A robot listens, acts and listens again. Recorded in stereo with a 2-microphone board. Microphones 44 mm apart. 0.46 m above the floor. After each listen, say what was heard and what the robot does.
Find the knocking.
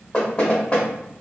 The knocking: about 25° left or 155° left. Turn 25° left.
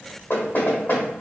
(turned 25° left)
So it is at 125° left. Turn 125° left.
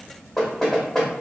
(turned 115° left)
The knocking is now 10° left. Turn 10° left.
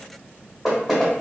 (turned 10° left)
Facing the knocking, under 1 m away.